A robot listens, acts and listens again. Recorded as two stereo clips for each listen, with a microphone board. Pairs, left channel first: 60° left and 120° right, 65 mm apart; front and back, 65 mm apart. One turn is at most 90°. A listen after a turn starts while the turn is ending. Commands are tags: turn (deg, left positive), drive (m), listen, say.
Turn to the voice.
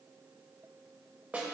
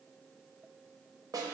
<listen/>
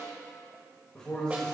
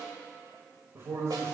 <turn deg="90"/>
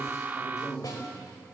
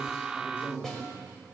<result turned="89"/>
<turn deg="50"/>
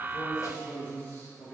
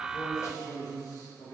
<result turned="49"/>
<say>Found it: a man speaking, straight ahead.</say>